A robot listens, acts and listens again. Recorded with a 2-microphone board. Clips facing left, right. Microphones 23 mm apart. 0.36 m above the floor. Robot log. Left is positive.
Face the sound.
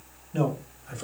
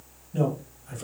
note: The man speaking: about 20° left or 160° left.
cmd yaw +20
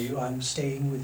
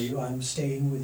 note: The man speaking: about 15° left or 165° left.
cmd yaw +15
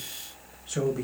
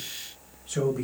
cmd yaw +30
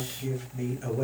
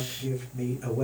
cmd yaw +30
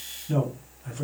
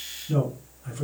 note: The man speaking: about 25° left or 155° left.
cmd yaw +25
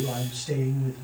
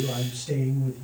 note: So it is at 135° left.
cmd yaw +135
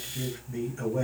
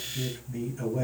note: The man speaking is now 15° left.
cmd yaw +15
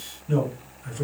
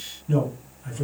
end: Facing the man speaking, 1 to 2 m away.